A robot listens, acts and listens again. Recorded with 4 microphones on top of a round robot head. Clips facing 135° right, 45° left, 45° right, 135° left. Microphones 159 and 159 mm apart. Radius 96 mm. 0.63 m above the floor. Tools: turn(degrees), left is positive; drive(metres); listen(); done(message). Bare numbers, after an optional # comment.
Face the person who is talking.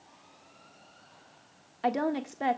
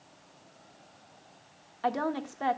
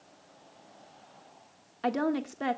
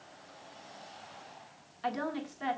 # The woman speaking: 65° right.
turn(-65)
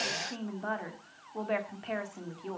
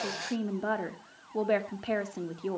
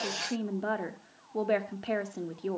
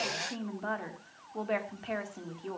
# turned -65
done("Found it: a woman speaking, straight ahead.")